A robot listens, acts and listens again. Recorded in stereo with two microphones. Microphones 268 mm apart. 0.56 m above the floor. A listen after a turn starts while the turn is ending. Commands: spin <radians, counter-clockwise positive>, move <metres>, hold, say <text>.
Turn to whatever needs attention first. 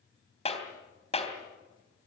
hold
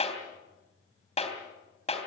hold
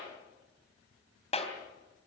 say I can't make out anything urgent, only a clap.